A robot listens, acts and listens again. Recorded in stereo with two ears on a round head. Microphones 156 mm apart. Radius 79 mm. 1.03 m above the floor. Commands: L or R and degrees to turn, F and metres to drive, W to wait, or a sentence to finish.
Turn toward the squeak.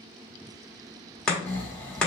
W
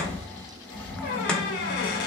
L60
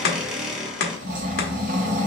Found it: a squeak, straight ahead, under 1 m away.